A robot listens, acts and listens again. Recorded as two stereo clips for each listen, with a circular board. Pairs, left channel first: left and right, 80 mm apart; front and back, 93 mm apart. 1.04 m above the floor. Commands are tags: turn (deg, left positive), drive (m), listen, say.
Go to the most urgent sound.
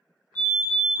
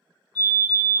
<turn deg="150"/>
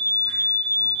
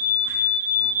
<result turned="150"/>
<turn deg="-10"/>
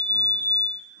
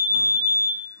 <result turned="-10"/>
<drive m="1.0"/>
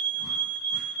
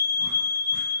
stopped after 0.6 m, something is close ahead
<say>I am next to the fire alarm.</say>